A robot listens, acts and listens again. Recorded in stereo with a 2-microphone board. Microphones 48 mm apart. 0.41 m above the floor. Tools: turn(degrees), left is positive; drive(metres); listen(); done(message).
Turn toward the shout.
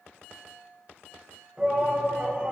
turn(degrees=-25)
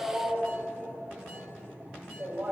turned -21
turn(degrees=-130)
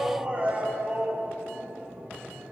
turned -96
turn(degrees=-35)
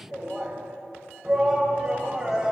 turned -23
turn(degrees=-10)
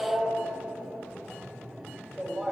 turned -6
done("Found it: a shout, straight ahead.")